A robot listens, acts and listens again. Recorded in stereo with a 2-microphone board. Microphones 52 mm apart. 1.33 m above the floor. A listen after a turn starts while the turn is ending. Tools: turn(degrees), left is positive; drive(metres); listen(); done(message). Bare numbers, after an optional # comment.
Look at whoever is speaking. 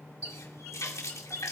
listen()
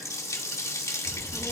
# The child speaking: about 20° left or 160° left.
turn(20)
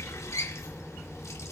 done("Found it: a child speaking, straight ahead.")